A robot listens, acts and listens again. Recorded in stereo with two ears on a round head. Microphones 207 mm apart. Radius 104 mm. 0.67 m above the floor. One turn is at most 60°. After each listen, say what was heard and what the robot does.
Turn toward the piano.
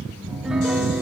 Turn 30° right.
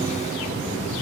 Keep listening.
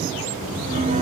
So it is at 150° right. Turn 60° right.
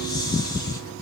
Nothing new. It was at 90° right. Turn 60° right.
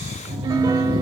The piano is now 15° right. Turn 15° right.
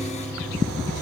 Found it: a piano, straight ahead, 1 to 2 m away.